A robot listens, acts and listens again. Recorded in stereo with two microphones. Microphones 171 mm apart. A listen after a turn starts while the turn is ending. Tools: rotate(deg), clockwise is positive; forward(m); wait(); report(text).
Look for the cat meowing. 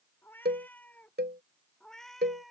rotate(-30)
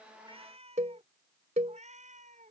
rotate(45)
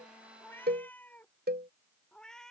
report("Facing the cat meowing.")